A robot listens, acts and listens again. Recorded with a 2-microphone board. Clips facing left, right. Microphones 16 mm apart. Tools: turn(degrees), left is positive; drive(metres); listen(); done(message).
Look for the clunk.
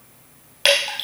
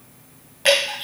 listen()
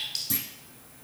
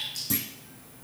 turn(degrees=-30)
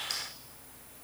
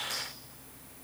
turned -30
listen()
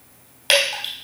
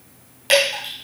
done("I heard a clunk, but can't make it out now. It was about 25° left or 145° right.")